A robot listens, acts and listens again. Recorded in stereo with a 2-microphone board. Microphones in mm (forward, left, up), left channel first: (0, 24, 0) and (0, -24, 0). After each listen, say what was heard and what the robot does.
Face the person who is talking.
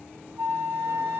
Keep listening.
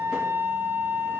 Keep listening.
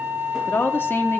The woman speaking: about 45° left or 135° left. Turn 45° left.
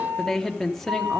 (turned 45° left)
Facing the woman speaking.